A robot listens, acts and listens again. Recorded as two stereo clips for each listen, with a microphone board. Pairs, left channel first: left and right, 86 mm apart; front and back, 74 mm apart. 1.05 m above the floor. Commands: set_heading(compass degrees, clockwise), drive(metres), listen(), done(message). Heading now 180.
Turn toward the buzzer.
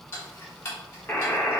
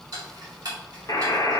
set_heading(155)
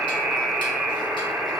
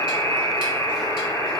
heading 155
set_heading(175)
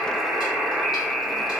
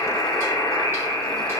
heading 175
done("Facing the buzzer, under 1 m away.")